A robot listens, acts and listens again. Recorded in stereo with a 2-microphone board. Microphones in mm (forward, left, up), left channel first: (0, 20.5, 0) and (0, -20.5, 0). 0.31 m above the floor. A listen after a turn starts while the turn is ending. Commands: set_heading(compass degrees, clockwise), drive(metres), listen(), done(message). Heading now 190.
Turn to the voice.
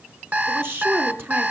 set_heading(250)
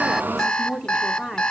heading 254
set_heading(269)
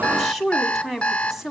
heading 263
done("Found it: a woman speaking, straight ahead, 1 to 2 m away.")